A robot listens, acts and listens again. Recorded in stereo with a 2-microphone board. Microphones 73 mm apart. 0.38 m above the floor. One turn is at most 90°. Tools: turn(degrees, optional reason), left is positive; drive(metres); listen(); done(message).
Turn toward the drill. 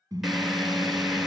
turn(degrees=30)
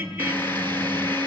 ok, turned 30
turn(degrees=90, reason="So it is at 150° left.")
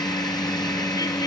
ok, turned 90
turn(degrees=65, reason="The drill is now 65° left.")
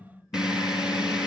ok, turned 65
turn(degrees=-10, reason="The drill is now 10° right.")
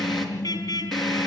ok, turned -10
done("Facing the drill, over 4 m away.")